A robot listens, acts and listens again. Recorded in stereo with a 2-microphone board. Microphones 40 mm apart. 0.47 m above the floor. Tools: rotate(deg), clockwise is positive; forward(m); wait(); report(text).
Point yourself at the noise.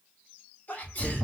rotate(-50)
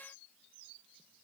wait()
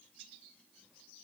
report("I heard a sneeze, but can't make it out now. It was about straight ahead or 80° left.")